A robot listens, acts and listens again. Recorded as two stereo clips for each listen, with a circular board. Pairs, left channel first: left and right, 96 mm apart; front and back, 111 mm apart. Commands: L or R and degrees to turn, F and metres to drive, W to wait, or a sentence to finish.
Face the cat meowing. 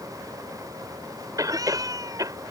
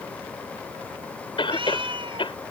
R140
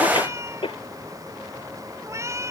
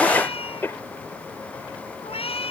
R30
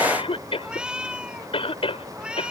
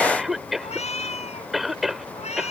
R10
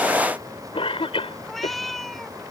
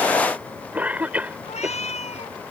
Found it: a cat meowing, straight ahead.